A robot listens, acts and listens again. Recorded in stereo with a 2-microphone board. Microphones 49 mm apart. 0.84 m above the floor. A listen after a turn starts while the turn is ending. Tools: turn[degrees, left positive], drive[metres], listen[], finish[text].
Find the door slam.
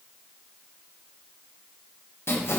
Action: listen[]
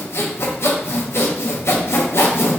Action: listen[]
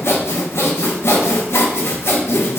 Action: finish[I can't make out a door slam, only sawing.]